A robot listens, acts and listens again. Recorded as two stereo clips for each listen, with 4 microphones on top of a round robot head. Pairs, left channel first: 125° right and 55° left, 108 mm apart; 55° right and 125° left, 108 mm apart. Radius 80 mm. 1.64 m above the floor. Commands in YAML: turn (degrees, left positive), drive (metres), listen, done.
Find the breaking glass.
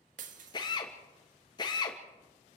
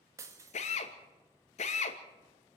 turn: 65
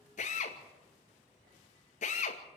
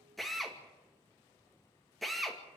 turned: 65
done: "I heard breaking glass from this way, but can't make it out now."